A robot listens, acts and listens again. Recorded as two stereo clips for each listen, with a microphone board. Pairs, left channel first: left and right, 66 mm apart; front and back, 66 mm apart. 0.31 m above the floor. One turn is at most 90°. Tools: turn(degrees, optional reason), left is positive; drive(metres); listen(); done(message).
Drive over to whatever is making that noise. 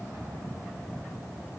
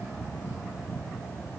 listen()
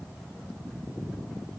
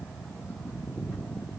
listen()
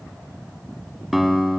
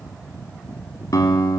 drive(metres=1.0)
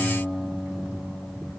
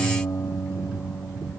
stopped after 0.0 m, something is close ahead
done("Blocked. The guitar is further on, straight ahead.")